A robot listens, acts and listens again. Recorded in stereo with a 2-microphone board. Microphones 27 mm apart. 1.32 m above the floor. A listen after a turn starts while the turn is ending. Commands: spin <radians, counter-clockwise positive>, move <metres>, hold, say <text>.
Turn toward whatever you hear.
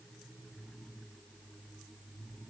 hold
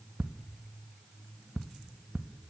spin -1.31
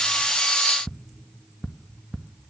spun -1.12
spin -0.17
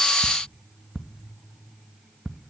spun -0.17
say Facing the ticking.